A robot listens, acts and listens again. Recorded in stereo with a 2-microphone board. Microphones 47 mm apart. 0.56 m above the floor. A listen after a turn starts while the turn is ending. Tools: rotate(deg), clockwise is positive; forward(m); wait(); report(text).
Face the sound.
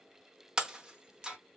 rotate(30)
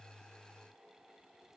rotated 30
wait()
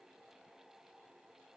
report("I heard breaking glass, but can't make it out now. It was about 15° left or 135° right.")